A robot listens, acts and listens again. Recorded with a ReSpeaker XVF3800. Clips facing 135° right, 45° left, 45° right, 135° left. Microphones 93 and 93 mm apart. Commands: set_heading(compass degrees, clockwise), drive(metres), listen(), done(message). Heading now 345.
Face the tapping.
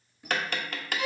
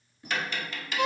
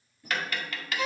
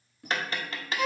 set_heading(150)
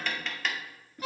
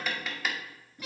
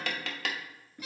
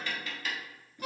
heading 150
set_heading(185)
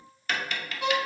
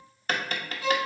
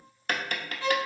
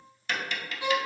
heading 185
done("Found it: tapping, straight ahead, 1 to 2 m away.")